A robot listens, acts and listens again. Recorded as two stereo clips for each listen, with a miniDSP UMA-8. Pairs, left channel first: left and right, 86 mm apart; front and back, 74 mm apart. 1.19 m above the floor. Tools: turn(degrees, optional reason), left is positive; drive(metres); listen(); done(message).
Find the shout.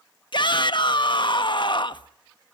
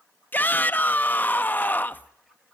turn(degrees=65, reason="The shout: 65° left.")
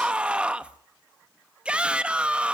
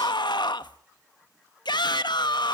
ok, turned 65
turn(degrees=-10, reason="The shout is now 10° right.")
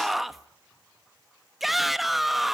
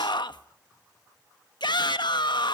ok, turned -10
done("Facing the shout.")